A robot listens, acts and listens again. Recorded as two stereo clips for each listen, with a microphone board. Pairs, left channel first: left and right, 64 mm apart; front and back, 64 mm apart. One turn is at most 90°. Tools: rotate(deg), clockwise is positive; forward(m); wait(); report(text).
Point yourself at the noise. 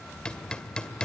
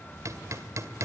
rotate(-90)
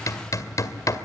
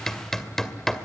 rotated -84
rotate(-85)
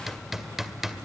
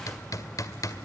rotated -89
report("Facing the hammering.")